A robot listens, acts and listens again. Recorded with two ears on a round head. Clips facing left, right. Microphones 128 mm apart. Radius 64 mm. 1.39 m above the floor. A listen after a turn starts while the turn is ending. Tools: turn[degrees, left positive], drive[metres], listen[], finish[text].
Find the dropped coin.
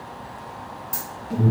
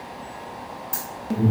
Action: turn[30]
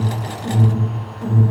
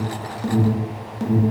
Action: listen[]
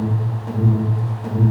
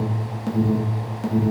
Action: finish[I heard a dropped coin, but can't make it out now. It was about 30° right or 150° left.]